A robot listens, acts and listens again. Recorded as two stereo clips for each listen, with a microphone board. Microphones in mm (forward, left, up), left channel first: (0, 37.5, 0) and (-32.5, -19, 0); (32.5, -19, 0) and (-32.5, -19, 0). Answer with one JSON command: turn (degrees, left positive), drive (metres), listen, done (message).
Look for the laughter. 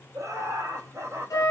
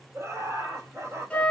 {"turn": -155}
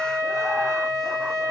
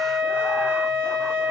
{"listen": true}
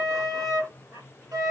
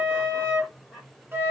{"turn": -105}
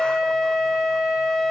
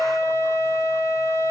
{"listen": true}
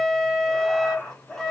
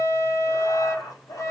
{"turn": -15}
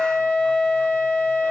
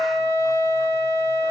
{"listen": true}
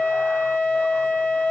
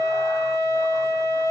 {"listen": true}
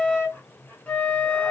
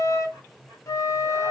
{"done": "I heard laughter from this way, but can't make it out now."}